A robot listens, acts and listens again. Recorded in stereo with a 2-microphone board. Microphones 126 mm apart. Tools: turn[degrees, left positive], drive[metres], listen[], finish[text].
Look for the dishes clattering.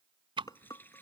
Thought: The dishes clattering: about 30° left or 150° left.
Action: turn[30]
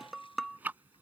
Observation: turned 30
Action: finish[Facing the dishes clattering.]